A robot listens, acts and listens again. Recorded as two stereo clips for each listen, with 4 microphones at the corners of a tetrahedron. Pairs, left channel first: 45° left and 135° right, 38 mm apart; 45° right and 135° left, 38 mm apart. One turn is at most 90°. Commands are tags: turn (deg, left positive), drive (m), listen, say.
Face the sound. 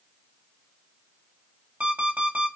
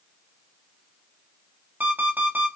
<turn deg="90"/>
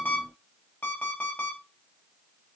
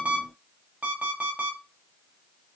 <turn deg="85"/>
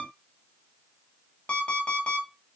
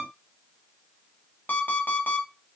<say>Found it: an alarm clock, straight ahead, 2 to 4 m away.</say>